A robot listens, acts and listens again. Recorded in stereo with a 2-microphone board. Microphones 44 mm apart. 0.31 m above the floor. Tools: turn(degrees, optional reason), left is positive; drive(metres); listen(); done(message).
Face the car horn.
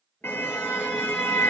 turn(degrees=60, reason="The car horn: about 60° left or 120° left.")
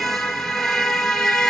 done("Found it: a car horn, straight ahead.")